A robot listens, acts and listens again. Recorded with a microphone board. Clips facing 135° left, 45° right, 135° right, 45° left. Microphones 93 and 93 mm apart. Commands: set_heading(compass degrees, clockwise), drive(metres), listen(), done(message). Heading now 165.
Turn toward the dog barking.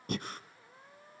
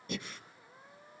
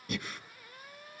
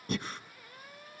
listen()
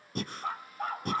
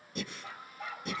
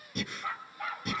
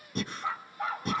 set_heading(70)
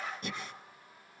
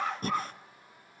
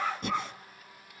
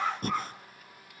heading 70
set_heading(115)
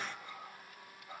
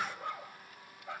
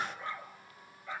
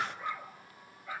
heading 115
set_heading(150)
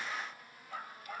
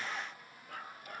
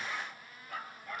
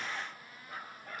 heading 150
set_heading(160)
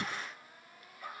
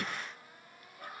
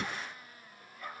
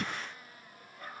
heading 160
done("Found it: a dog barking, straight ahead.")